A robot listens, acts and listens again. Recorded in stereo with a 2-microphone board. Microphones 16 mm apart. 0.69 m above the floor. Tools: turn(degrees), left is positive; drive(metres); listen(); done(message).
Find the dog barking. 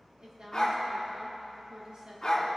turn(degrees=40)
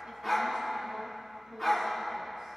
done("Found it: a dog barking, straight ahead.")